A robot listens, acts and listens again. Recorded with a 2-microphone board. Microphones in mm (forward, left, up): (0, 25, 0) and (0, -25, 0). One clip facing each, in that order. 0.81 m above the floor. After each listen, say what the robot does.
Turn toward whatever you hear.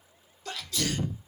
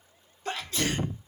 Turn 35° right.
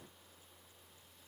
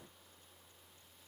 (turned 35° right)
Keep listening.
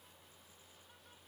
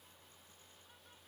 I heard a sneeze, but can't make it out now. It was about straight ahead or 110° right.